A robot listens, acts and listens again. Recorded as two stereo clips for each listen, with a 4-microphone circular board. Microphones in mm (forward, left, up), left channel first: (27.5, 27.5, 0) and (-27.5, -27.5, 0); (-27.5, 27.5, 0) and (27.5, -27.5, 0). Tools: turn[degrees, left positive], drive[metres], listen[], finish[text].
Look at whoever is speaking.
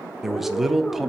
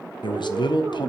Thought: The man speaking: 140° left.
Action: turn[140]
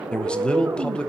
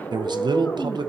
Thought: The man speaking is now 30° right.
Action: turn[-30]
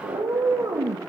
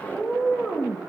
Action: listen[]
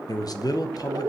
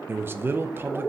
Thought: The man speaking is now 15° left.
Action: turn[15]
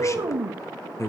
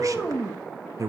Action: finish[Found it: a man speaking, straight ahead.]